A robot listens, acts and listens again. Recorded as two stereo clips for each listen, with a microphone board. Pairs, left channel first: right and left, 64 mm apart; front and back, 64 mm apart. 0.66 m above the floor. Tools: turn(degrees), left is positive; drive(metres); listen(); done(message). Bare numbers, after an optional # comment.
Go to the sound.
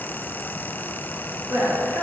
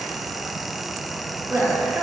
# The woman speaking: 130° left.
turn(130)
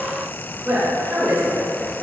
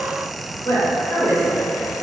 # The woman speaking is now 15° left.
turn(15)
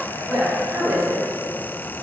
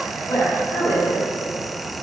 drive(1.0)
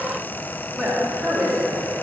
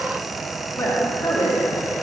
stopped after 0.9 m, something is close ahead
done("Arrived at the woman speaking, straight ahead.")